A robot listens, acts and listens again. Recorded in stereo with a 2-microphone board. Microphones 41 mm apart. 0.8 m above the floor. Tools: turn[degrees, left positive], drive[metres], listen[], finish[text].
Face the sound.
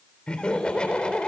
Thought: The laughter: about 25° left or 155° left.
Action: turn[25]
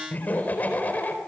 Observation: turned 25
Thought: So it is at 135° left.
Action: turn[135]
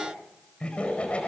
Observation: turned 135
Thought: The laughter is now 25° left.
Action: turn[25]
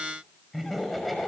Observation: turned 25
Action: finish[Facing the laughter, over 4 m away.]